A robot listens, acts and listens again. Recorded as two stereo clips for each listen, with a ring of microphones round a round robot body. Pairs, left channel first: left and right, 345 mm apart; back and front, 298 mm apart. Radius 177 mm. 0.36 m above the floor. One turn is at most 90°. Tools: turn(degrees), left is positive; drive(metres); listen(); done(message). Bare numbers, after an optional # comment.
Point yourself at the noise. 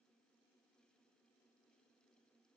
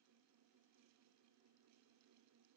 listen()
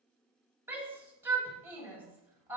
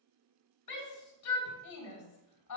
# The shout: 175° right.
turn(-90)
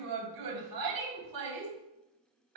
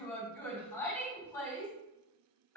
# The shout is now 100° right.
turn(-90)
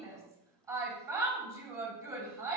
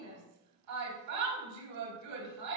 # The shout is now 10° right.
turn(-10)
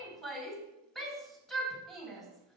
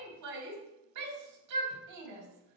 done("Found it: a shout, straight ahead, 2 to 4 m away.")